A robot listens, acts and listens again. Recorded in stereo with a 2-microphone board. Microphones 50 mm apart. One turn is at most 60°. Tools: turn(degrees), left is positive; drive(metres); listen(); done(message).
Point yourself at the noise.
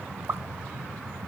turn(degrees=-60)
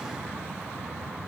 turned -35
listen()
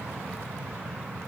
done("I heard a pop, but can't make it out now. It was about 40° right or 70° right.")